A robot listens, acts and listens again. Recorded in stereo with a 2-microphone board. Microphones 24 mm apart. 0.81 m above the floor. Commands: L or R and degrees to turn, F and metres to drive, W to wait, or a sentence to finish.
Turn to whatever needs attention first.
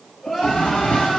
L30
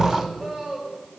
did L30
R30
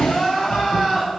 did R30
L10
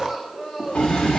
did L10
Found it: crying, straight ahead, 1 to 2 m away.